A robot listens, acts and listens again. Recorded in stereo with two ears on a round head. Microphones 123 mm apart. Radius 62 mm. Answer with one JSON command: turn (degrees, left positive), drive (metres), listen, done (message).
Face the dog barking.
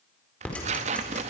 {"listen": true}
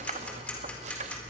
{"listen": true}
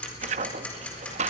{"done": "I can't make out a dog barking, only ticking and tearing paper."}